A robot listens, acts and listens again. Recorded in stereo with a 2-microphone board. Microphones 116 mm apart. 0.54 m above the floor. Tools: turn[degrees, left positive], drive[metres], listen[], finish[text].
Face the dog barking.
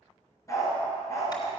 Thought: The dog barking: about 25° left or 155° left.
Action: turn[25]
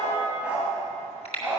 Thought: So it is at 10° right.
Action: turn[-10]
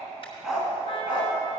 Thought: The dog barking is now 10° right.
Action: turn[-10]
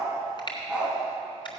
Thought: The dog barking is now 10° right.
Action: turn[-10]
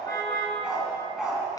Action: finish[Facing the dog barking, 2 to 4 m away.]